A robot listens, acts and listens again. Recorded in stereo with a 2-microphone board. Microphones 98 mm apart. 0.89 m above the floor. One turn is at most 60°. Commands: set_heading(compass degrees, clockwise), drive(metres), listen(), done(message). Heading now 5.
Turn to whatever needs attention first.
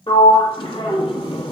listen()
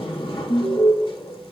set_heading(305)
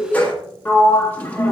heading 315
set_heading(255)
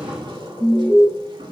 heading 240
done("Facing the alarm.")